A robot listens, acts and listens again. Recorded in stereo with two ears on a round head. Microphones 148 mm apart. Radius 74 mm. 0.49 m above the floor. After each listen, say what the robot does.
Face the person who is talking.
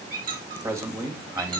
Turn 15° right.
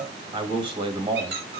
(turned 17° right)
Turn 150° right.
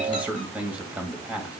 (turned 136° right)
Turn 10° right.
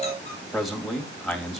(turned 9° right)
Found it: a man speaking, straight ahead, 2 to 4 m away.